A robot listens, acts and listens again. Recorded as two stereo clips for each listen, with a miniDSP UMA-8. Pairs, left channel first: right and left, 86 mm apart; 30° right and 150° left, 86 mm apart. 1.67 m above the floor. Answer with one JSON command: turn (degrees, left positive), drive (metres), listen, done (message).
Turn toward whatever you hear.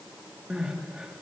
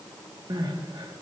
{"turn": 170}
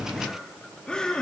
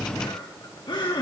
{"turn": -10}
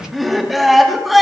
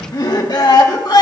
{"done": "Facing the crying, 2 to 4 m away."}